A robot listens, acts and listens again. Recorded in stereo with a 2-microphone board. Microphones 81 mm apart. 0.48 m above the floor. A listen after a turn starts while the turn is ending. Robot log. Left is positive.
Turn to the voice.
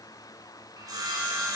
cmd idle
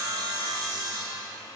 cmd idle
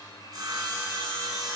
end: I can't make out anyone speaking, only sawing.